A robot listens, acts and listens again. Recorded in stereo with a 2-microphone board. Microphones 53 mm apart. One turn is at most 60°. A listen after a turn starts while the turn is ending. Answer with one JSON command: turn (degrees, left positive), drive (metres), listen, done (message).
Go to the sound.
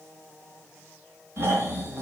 {"turn": -45}
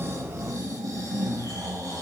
{"turn": -60}
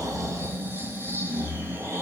{"turn": -45}
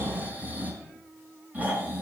{"turn": -30}
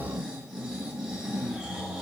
{"turn": -15}
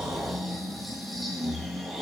{"drive": 1.0}
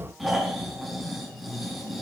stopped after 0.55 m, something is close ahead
{"done": "Something is in my way. I am facing the snoring but have not reached it."}